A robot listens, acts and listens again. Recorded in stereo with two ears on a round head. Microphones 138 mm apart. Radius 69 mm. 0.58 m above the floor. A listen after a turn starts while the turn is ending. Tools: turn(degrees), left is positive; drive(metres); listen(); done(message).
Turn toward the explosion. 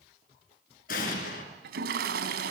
turn(degrees=60)
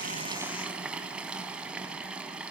listen()
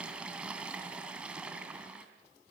done("I heard an explosion, but can't make it out now. It was about straight ahead or 60° left.")